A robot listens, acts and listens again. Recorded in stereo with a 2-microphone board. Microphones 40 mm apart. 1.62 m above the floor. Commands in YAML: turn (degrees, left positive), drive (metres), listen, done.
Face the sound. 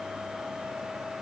listen: true
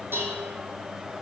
turn: -90
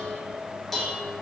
turn: 10
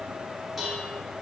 done: "Facing the dishes clattering, 2 to 4 m away."